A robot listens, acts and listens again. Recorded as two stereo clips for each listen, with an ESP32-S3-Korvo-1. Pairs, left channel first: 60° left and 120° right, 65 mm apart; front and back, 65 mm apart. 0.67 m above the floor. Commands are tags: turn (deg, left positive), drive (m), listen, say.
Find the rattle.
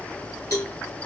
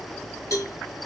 <listen/>
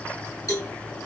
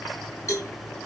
<listen/>
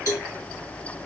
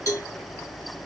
<say>I can't make out a rattle to turn to.</say>